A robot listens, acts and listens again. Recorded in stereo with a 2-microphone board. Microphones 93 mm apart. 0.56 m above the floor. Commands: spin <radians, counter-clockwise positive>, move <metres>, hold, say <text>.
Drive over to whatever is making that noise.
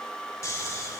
spin 0.61
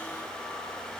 hold
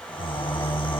spin 1.92
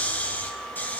spin 0.35
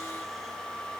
hold
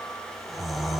move 1.0
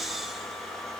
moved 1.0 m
move 1.0
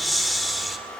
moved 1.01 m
move 1.0
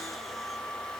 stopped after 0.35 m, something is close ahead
hold
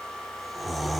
say Arrived at the snoring, straight ahead.